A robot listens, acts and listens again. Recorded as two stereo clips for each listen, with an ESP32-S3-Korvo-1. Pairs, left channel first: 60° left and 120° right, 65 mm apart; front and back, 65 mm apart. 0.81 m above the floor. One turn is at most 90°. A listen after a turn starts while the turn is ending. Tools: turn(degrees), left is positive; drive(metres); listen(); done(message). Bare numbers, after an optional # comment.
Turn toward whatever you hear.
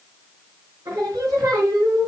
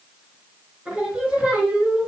# The singing: 105° right.
turn(-90)
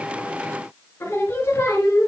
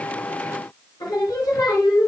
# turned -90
done("Found it: singing, straight ahead.")